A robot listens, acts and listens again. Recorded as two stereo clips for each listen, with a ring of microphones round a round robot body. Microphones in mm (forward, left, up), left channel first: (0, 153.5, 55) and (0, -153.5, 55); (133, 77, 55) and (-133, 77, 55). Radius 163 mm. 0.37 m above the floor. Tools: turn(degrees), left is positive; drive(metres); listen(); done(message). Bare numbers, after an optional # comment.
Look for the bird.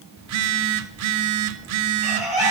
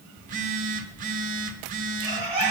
# The bird: 100° left.
turn(100)
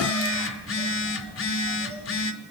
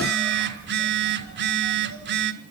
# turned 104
listen()
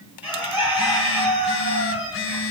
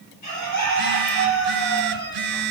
done("Found it: a bird, straight ahead.")